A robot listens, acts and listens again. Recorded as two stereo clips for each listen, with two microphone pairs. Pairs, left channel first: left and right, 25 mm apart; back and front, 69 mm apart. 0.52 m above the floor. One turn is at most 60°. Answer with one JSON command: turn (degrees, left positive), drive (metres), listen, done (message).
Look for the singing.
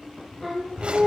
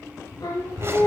{"turn": 60}
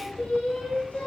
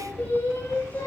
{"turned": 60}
{"turn": 60}
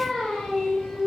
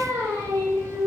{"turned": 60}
{"turn": 40}
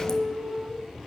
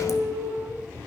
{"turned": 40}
{"turn": -25}
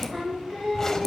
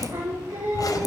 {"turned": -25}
{"turn": -15}
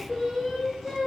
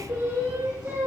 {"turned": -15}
{"turn": -10}
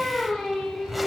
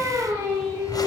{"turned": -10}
{"done": "Found it: singing, straight ahead, over 4 m away."}